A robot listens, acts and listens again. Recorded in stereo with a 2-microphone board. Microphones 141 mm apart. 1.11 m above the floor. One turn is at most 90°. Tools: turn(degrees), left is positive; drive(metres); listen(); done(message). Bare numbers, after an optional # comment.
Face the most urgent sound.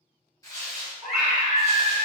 turn(30)
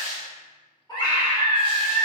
# So it is at 150° left.
turn(90)
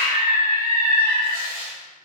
# The scream is now 85° left.
turn(85)
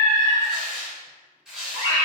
# The scream is now 20° right.
turn(-20)
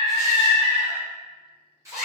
done("Found it: a scream, straight ahead, 1 to 2 m away.")